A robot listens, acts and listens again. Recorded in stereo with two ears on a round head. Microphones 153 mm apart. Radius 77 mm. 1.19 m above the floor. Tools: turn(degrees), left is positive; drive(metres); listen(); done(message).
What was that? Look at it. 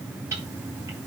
turn(degrees=-15)
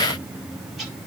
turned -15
listen()
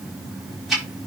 done("Found it: ticking, straight ahead, over 4 m away.")